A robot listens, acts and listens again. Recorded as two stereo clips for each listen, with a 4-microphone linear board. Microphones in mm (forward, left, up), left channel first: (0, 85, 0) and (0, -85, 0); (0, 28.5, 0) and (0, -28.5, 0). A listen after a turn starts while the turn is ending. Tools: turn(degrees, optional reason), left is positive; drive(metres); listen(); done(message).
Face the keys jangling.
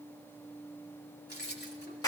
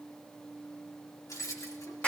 turn(degrees=90)
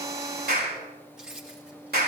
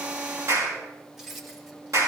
done("Found it: keys jangling, straight ahead.")